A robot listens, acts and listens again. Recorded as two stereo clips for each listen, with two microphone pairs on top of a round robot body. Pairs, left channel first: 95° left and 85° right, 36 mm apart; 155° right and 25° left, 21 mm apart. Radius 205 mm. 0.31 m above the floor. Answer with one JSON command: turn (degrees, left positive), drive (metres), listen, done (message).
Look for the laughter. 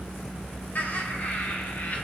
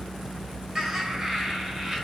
{"turn": 105}
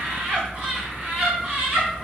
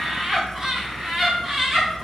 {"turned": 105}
{"turn": -25}
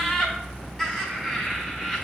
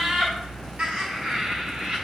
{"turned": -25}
{"turn": 15}
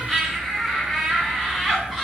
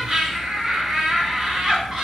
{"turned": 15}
{"done": "Facing the laughter, over 4 m away."}